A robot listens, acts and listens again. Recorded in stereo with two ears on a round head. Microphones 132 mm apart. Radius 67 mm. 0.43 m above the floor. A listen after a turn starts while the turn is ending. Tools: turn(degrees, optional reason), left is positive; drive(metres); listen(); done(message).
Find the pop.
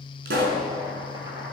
turn(degrees=-90)
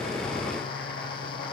done("Facing where the pop came from. I can't hear it now.")